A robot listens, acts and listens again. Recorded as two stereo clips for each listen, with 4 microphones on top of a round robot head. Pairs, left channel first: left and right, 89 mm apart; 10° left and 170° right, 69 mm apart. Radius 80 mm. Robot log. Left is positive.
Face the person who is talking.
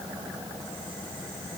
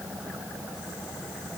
cmd idle
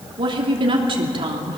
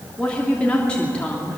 note: The woman speaking: 65° right.
cmd yaw -65
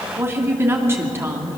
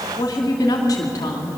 note: The woman speaking is now 25° right.
cmd yaw -25
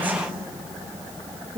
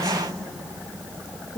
note: The woman speaking is now 20° right.
cmd yaw -20
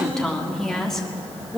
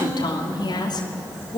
end: Facing the woman speaking, 2 to 4 m away.